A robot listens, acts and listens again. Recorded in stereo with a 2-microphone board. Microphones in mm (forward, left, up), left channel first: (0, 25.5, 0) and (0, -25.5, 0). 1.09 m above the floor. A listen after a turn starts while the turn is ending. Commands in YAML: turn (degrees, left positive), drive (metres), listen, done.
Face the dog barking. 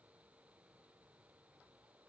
listen: true
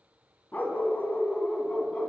turn: 25
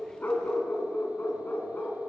turn: 135
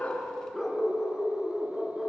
done: "Facing the dog barking."